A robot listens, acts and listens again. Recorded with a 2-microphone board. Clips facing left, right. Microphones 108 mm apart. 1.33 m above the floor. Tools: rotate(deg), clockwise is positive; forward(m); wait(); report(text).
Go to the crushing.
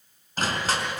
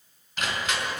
rotate(-35)
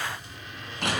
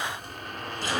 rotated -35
rotate(-110)
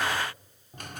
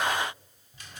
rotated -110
wait()
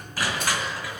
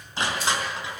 rotate(25)
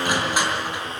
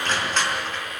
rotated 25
rotate(-15)
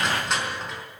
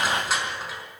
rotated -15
forward(1.0)
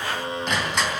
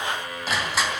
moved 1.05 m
forward(1.0)
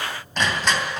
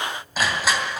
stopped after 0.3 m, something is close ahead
report("Something is in my way. I am facing the crushing but have not reached it.")